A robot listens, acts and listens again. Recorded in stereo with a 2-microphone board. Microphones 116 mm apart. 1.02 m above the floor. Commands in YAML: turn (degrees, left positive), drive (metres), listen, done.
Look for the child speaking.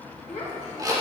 turn: 75
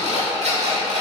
listen: true
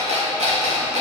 listen: true
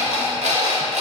done: "I heard a child speaking, but can't make it out now. It was about straight ahead or 30° left."